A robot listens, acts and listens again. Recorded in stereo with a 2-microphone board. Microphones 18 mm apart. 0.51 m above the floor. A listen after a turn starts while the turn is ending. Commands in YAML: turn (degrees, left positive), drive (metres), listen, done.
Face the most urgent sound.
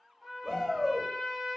turn: -30
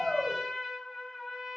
listen: true
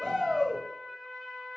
turn: -140
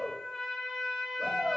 turn: -10
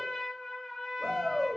done: "Facing the shout."